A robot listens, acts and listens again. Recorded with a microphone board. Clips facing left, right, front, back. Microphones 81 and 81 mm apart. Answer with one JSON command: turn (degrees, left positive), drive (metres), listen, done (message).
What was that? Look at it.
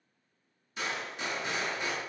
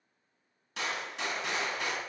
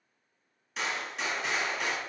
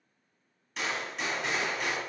{"turn": -90}
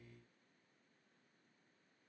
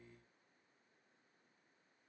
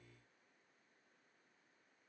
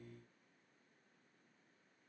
{"done": "Facing where the gunshot came from. I can't hear it now."}